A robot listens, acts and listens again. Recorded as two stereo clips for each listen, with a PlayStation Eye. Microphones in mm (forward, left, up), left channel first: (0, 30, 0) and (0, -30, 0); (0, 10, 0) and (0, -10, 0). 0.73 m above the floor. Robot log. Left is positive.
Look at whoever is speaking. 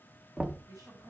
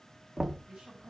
note: The woman speaking: about 70° right or 110° right.
cmd yaw -70
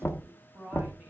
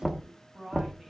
note: So it is at 30° right.
cmd yaw -30
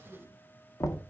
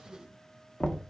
end: Facing the woman speaking, 1 to 2 m away.